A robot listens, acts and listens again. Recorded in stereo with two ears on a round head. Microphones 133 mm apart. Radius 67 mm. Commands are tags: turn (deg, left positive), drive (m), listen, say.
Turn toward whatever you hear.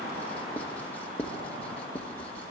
<turn deg="30"/>
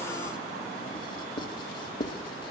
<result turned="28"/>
<turn deg="140"/>
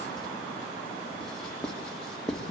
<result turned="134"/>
<say>Found it: writing, straight ahead.</say>